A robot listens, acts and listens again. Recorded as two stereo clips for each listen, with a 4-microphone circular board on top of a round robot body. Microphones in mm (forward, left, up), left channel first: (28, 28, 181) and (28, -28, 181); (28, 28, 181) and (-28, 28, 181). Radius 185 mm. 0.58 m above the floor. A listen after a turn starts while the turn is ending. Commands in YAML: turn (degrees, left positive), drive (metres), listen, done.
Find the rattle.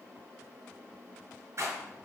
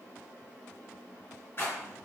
turn: -50
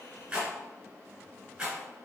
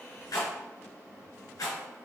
turn: -15
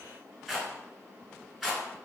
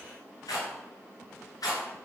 done: "Found it: a rattle, straight ahead."